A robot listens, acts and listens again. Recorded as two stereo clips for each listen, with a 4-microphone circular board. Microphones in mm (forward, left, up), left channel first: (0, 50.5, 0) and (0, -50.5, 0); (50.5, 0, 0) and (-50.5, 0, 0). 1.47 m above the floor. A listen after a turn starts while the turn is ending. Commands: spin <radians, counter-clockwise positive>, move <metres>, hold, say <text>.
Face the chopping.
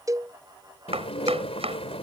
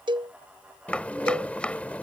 spin -1.40
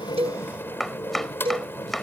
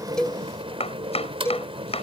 say Found it: chopping, straight ahead.